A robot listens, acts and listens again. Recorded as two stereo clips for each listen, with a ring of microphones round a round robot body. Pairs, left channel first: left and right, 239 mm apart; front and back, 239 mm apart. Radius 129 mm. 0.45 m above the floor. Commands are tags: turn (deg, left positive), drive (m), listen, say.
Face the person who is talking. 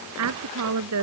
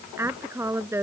<turn deg="-100"/>
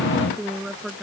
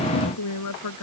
<say>Facing the woman speaking.</say>